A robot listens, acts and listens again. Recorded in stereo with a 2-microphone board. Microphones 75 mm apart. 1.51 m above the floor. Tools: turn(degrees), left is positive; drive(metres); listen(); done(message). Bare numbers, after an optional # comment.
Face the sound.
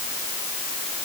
listen()
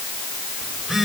turn(30)
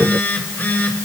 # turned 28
# So it is at 155° left.
turn(155)
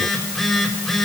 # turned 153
done("Facing the phone buzzing, over 4 m away.")